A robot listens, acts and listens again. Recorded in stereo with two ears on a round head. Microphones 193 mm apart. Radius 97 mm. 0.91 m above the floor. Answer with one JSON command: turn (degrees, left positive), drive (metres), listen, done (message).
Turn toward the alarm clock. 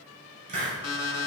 {"turn": 90}
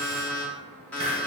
{"done": "Facing the alarm clock, under 1 m away."}